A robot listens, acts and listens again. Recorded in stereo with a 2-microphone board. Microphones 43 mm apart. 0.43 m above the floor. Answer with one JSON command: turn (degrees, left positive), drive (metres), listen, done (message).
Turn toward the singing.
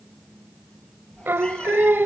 {"turn": -55}
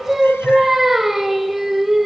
{"done": "Found it: singing, straight ahead."}